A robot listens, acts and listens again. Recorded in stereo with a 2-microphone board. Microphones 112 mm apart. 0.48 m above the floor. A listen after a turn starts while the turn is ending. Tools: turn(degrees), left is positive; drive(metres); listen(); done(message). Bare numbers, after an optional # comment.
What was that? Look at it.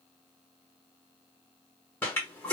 # The toilet flushing: about 20° left or 160° left.
turn(20)
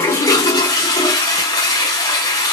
# So it is at 140° left.
turn(140)
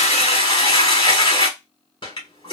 # The toilet flushing is now 50° left.
turn(50)
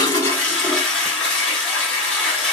# The toilet flushing is now 10° left.
turn(10)
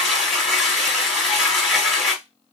done("Facing the toilet flushing.")